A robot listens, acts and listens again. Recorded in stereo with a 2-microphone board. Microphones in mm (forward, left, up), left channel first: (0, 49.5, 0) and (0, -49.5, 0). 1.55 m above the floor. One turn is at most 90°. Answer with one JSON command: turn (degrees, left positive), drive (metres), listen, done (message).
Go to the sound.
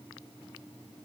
{"listen": true}
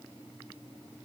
{"listen": true}
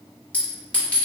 {"turn": 30}
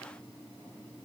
{"listen": true}
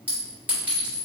{"turn": -20}
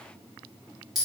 {"drive": 1.0}
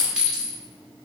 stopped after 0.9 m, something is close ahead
{"turn": -10}
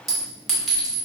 {"done": "I am next to the clink."}